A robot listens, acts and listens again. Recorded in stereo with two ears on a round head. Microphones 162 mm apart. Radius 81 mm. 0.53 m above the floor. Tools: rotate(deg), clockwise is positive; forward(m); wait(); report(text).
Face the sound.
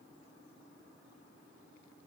wait()
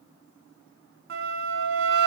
rotate(60)
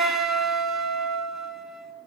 report("Found it: a flute, straight ahead, 1 to 2 m away.")